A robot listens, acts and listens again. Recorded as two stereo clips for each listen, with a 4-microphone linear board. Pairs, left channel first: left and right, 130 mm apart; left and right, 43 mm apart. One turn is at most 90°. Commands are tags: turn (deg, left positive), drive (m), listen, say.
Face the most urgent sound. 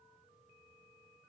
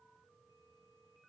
<listen/>
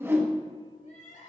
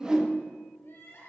<turn deg="65"/>
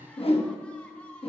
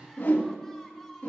<turn deg="10"/>
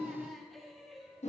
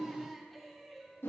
<say>Found it: crying, straight ahead, 2 to 4 m away.</say>